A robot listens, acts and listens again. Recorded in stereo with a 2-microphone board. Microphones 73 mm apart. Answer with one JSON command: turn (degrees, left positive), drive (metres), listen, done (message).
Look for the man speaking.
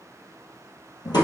{"listen": true}
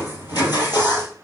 {"listen": true}
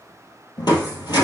{"done": "I can't make out a man speaking, only crushing."}